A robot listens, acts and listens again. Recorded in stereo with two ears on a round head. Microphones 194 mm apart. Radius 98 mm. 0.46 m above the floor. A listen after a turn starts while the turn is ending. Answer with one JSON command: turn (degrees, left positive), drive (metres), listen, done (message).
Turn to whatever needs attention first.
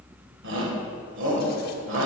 {"turn": -65}
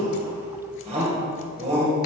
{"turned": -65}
{"turn": -35}
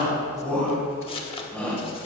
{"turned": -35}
{"turn": 10}
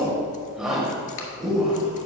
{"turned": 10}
{"done": "Facing the shout, 1 to 2 m away."}